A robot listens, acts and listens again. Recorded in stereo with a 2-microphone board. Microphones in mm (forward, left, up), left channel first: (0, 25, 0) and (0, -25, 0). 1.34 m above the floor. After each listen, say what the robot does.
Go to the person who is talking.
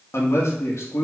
Turn 65° left.
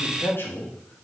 Turn 50° left.
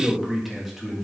Drive 1.0 m forward.
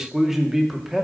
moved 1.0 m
Turn 10° right.
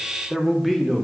Drive 1.0 m forward.
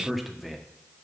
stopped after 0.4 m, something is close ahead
I am next to the man speaking.